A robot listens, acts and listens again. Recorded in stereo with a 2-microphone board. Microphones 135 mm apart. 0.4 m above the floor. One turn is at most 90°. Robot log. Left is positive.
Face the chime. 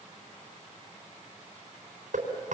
cmd idle
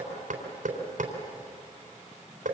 cmd idle
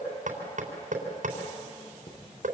note: The chime: about 50° left or 130° left.
cmd yaw +50
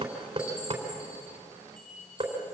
note: So it is at 80° left.
cmd yaw +80
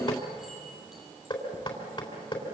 cmd idle
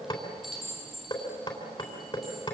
end: Facing the chime, over 4 m away.